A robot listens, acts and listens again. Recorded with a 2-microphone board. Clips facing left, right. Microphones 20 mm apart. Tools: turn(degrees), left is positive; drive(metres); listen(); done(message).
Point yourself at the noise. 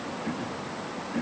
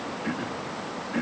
turn(degrees=-25)
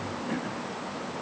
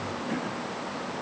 done("Facing the throat clearing.")